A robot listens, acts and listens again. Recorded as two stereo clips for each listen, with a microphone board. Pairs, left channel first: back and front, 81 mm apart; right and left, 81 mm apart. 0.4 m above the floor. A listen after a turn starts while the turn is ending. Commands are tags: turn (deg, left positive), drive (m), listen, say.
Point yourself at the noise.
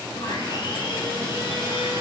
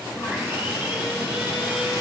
<turn deg="155"/>
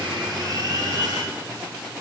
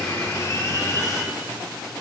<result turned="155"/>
<turn deg="-45"/>
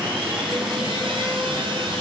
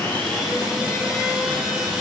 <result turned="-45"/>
<say>Found it: sawing, straight ahead.</say>